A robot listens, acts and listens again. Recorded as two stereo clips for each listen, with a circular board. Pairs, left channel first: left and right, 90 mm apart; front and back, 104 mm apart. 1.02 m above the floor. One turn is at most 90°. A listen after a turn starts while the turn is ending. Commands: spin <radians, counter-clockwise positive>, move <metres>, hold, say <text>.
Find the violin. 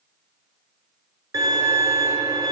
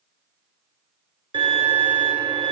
spin -1.57
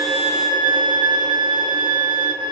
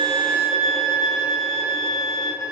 spin -0.96
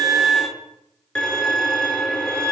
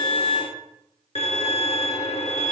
spin 0.17
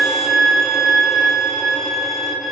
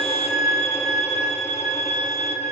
say Facing the violin.